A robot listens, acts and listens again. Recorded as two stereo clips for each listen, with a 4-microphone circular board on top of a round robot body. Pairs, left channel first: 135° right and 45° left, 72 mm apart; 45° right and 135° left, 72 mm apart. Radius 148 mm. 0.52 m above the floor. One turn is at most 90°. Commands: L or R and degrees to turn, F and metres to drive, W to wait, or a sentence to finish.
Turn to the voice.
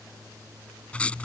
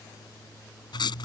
W
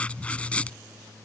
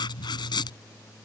W
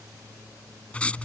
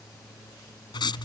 I can't make out anyone speaking to turn to.